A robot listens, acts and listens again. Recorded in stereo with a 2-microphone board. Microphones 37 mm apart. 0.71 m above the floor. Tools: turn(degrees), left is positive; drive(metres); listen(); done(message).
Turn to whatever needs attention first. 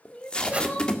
turn(degrees=35)
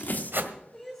done("Facing the crying.")